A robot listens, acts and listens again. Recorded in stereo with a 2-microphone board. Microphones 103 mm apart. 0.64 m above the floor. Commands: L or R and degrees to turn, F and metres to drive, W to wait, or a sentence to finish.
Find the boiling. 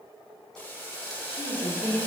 L20
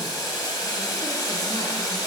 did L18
L145
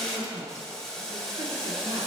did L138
Found it: boiling, straight ahead, 1 to 2 m away.